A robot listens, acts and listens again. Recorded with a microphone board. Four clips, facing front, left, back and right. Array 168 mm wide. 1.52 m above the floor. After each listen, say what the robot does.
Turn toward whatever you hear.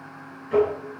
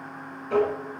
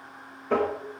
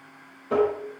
Turn 160° right.
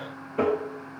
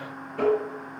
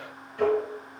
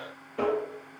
Facing the tapping, over 4 m away.